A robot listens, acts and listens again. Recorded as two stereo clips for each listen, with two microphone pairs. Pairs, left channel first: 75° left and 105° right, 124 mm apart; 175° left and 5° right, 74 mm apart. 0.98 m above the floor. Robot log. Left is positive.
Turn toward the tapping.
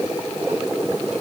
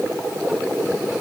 cmd idle
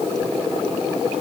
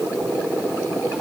cmd idle
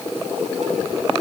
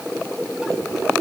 end: I can't make out tapping to turn to.